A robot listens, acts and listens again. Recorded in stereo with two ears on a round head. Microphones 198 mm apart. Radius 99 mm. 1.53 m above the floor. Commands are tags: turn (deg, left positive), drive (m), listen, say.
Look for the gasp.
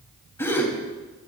<turn deg="30"/>
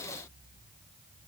<listen/>
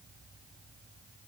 <say>I heard a gasp, but can't make it out now. It was about 20° right or 140° left.</say>